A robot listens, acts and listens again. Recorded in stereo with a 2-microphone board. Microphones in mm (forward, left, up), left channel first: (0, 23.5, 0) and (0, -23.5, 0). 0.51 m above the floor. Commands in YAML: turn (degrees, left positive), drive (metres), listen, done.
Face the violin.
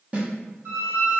turn: -70
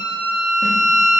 turn: -10
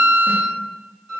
done: "Facing the violin, 1 to 2 m away."